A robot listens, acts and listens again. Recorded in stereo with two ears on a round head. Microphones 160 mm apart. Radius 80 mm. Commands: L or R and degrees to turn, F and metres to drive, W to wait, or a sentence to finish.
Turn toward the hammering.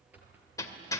L20
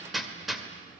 Facing the hammering.